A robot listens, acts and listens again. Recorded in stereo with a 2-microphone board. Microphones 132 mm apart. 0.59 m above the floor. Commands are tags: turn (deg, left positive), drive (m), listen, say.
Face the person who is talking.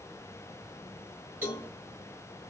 <listen/>
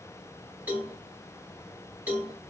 <listen/>
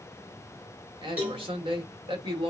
<turn deg="-40"/>
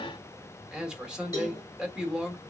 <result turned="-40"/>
<say>Facing the man speaking, 1 to 2 m away.</say>